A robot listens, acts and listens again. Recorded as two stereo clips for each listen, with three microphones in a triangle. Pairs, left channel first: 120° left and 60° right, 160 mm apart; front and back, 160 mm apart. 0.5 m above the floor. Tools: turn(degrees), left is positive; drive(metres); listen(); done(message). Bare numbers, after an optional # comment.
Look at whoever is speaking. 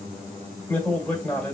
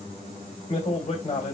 # The man speaking: 40° left.
turn(40)
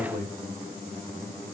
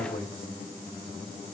done("Facing the man speaking, 1 to 2 m away.")